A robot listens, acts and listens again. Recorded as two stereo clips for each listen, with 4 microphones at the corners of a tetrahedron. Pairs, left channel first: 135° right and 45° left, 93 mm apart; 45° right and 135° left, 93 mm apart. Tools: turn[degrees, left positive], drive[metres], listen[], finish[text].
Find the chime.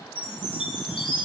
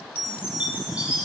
Thought: The chime: 150° right.
Action: turn[-150]
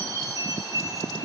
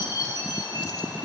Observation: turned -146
Action: finish[Found it: a chime, straight ahead.]